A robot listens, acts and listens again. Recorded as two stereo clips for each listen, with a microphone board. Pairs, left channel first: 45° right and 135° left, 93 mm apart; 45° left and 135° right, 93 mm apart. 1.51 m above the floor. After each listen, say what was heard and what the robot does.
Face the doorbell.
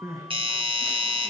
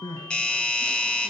The doorbell: 120° left. Turn 120° left.
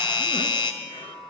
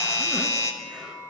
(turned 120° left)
The doorbell is now 10° right. Turn 10° right.
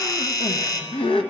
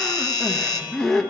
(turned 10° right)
Facing the doorbell.